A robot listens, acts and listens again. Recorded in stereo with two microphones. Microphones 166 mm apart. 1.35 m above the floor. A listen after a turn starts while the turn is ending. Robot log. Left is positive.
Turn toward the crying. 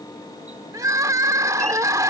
note: The crying: about 20° right or 160° right.
cmd yaw -20
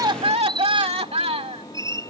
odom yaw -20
note: So it is at 140° right.
cmd yaw -140
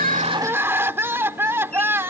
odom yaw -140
note: The crying is now 15° right.
cmd yaw -15
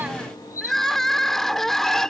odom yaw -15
end: Found it: crying, straight ahead.